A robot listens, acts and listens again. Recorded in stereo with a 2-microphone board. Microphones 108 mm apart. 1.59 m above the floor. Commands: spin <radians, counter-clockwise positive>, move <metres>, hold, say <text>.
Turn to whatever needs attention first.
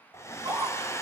spin -0.61
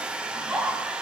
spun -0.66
say Found it: a scream, straight ahead, over 4 m away.